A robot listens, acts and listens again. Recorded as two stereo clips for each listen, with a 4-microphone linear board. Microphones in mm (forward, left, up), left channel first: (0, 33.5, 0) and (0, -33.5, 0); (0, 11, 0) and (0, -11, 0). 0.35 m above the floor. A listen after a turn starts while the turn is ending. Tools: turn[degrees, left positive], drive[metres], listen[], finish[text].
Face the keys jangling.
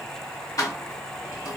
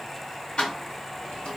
Thought: The keys jangling: about 60° left or 120° left.
Action: turn[60]
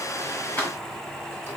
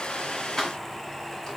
Thought: So it is at 25° left.
Action: turn[25]
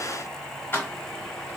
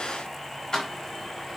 Thought: The keys jangling is now 30° left.
Action: turn[30]
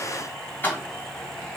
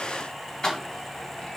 Thought: The keys jangling is now 30° left.
Action: turn[30]
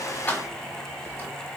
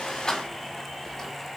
Thought: The keys jangling is now 25° left.
Action: turn[25]
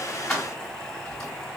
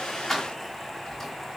Action: finish[Facing the keys jangling, 1 to 2 m away.]